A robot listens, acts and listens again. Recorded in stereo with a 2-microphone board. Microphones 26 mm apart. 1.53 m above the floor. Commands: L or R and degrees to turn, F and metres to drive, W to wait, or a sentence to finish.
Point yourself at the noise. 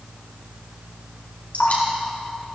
L90
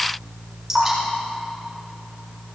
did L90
R10
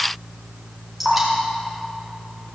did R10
Found it: dripping, straight ahead, 2 to 4 m away.